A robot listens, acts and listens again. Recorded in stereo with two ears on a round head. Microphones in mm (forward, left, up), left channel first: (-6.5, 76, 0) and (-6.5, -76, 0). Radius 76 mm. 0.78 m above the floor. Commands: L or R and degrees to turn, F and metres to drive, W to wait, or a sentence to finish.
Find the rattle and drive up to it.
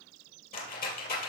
L55
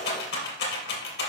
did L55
L70
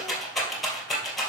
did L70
F1.0
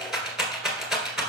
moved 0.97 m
F1.0
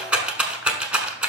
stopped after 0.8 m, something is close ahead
R10
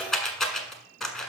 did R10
I am next to the rattle.